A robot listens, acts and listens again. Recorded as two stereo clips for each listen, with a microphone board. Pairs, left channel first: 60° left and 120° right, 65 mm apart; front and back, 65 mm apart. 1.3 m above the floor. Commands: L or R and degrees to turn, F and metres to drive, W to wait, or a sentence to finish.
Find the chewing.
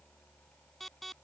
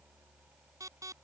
W
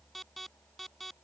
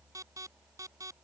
W
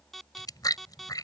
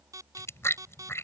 L50
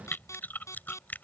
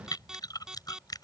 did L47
Found it: chewing, straight ahead.